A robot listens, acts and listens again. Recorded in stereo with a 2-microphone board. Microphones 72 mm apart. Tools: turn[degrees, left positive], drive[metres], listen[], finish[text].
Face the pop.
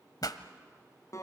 Thought: The pop: about 65° left or 115° left.
Action: turn[65]
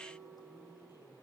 Action: listen[]
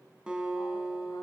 Action: finish[I heard a pop, but can't make it out now. It was about straight ahead or 50° left.]